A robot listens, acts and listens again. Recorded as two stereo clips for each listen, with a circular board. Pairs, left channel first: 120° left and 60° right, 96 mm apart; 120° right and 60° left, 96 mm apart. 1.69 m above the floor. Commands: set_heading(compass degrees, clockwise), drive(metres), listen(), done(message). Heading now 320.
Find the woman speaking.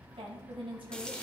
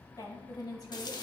set_heading(35)
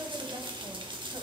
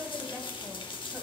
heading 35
set_heading(50)
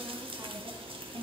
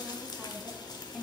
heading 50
set_heading(75)
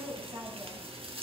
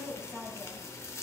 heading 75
set_heading(90)
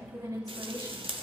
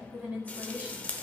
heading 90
set_heading(100)
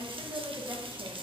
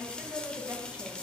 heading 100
set_heading(110)
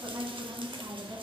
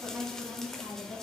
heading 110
done("Facing the woman speaking, 2 to 4 m away.")